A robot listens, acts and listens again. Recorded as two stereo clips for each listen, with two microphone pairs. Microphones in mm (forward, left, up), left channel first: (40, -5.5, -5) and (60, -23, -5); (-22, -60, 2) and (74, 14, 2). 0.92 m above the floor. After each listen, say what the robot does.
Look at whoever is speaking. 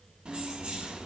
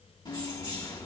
Keep listening.
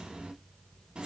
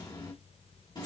Keep listening.
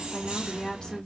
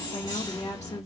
Turn 165° right.
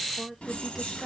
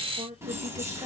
Turn 30° left.
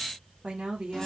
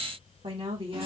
Found it: a woman speaking, straight ahead.